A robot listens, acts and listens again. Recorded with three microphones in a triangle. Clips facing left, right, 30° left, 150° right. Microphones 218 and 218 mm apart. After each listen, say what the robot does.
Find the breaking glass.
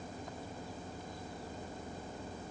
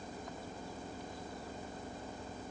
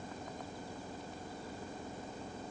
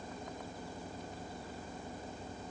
Keep listening.
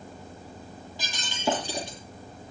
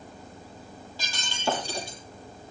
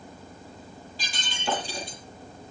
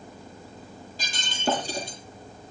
Turn 165° left.
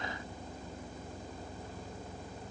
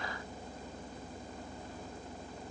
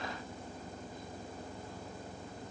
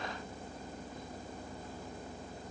I heard breaking glass from this way, but can't make it out now.